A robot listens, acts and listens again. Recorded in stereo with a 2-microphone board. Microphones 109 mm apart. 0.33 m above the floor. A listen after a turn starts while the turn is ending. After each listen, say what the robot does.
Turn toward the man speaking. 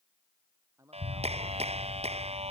Turn 30° right.
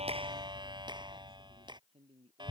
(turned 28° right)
Turn 120° right.
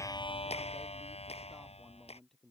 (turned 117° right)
Found it: a man speaking, straight ahead.